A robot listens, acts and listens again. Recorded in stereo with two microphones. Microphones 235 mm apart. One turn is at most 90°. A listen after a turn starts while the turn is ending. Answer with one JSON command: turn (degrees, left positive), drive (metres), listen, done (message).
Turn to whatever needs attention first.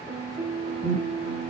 {"turn": 40}
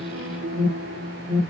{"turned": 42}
{"done": "Facing the alarm."}